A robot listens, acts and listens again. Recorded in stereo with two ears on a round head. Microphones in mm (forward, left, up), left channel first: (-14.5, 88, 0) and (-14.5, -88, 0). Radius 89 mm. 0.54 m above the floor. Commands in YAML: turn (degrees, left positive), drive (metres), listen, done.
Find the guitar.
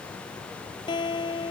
turn: 25
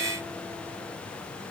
listen: true
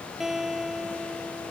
done: "Facing the guitar."